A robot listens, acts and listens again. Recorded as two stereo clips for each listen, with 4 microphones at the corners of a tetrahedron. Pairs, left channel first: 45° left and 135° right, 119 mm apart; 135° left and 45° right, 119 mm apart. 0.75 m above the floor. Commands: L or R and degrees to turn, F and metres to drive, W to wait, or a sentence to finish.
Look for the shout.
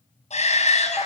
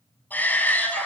L60
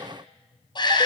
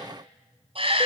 Facing the shout, over 4 m away.